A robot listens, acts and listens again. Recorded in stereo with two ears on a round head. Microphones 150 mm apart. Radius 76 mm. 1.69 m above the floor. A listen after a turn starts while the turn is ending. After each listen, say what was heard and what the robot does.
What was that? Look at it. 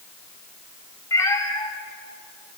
The cat meowing: about 20° left or 160° left. Turn 20° left.
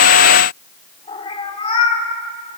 So it is at 140° left. Turn 140° left.
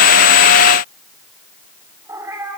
The cat meowing is now 20° right. Turn 20° right.
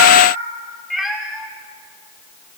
Found it: a cat meowing, straight ahead.